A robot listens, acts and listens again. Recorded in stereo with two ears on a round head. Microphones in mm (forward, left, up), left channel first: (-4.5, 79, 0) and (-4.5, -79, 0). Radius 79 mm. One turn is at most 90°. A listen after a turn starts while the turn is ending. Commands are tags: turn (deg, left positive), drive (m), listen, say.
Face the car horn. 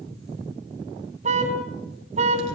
<turn deg="-40"/>
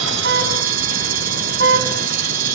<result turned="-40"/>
<turn deg="-90"/>
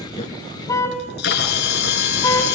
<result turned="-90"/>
<turn deg="20"/>
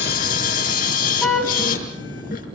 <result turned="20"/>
<say>Found it: a car horn, straight ahead.</say>